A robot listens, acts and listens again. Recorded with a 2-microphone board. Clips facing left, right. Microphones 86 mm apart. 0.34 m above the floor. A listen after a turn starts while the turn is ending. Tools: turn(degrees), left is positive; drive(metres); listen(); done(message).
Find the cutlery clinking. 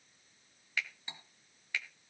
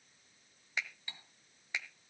turn(degrees=20)
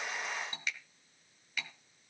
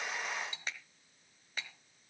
turn(degrees=135)
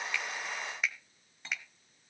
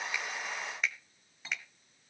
done("Facing the cutlery clinking, 1 to 2 m away.")